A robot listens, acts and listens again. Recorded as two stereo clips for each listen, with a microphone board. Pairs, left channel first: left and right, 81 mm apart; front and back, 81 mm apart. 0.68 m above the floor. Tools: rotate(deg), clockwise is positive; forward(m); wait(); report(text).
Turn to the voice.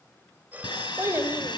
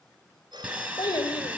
rotate(30)
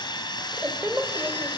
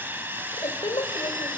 rotate(20)
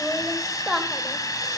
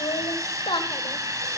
report("Facing the child speaking.")